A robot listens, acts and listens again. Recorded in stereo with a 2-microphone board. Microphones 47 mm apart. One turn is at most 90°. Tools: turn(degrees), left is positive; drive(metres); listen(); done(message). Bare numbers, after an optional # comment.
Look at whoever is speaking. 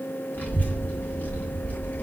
# The child speaking: about 45° left or 135° left.
turn(45)
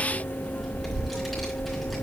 done("Facing the child speaking, 2 to 4 m away.")